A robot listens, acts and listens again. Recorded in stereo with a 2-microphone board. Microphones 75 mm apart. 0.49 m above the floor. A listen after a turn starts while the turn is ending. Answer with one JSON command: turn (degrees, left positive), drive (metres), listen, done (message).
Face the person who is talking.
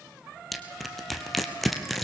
{"listen": true}
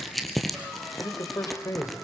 {"turn": 45}
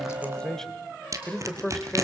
{"turn": 10}
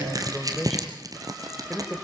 {"done": "Facing the man speaking."}